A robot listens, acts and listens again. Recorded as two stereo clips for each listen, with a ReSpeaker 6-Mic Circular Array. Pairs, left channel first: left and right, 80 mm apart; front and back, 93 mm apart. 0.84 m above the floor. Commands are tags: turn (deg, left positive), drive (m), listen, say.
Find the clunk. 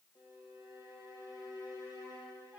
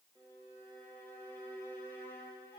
<listen/>
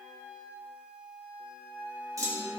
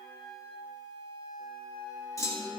<turn deg="-50"/>
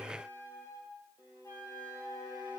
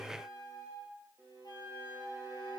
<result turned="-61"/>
<turn deg="10"/>
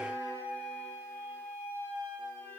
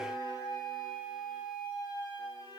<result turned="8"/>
<say>I heard a clunk from this way, but can't make it out now.</say>